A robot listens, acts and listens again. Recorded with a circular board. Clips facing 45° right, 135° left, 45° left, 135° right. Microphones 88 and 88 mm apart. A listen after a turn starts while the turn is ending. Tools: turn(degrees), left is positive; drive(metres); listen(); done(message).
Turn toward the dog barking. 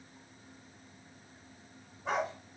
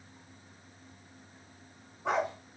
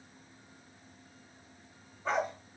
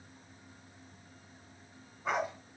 turn(degrees=145)
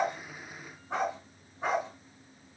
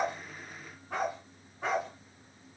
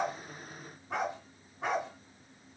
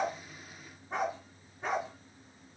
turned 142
turn(degrees=30)
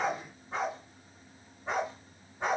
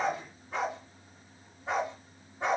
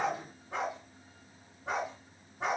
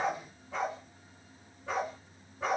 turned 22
turn(degrees=25)
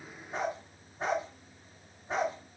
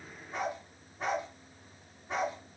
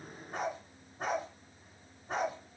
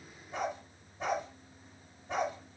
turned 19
turn(degrees=10)
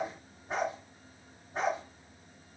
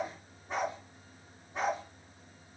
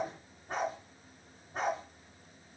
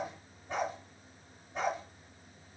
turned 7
done("Facing the dog barking.")